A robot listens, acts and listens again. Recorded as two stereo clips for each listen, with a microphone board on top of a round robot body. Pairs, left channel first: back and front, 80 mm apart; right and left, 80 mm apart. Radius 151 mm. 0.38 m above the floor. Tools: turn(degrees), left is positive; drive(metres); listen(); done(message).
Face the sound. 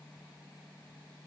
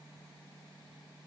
listen()
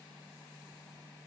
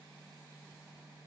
listen()
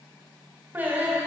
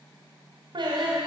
turn(degrees=70)
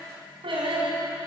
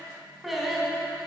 done("Found it: singing, straight ahead, over 4 m away.")